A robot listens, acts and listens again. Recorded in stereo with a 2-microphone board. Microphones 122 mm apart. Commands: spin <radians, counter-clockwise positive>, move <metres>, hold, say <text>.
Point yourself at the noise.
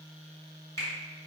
spin 0.44
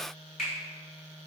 say Facing the finger snap.